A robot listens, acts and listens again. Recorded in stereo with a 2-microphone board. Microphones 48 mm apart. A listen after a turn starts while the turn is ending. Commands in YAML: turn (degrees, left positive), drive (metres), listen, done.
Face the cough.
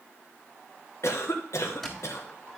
turn: 75
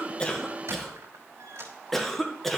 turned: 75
turn: 10
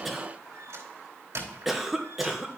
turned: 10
done: "Facing the cough, 1 to 2 m away."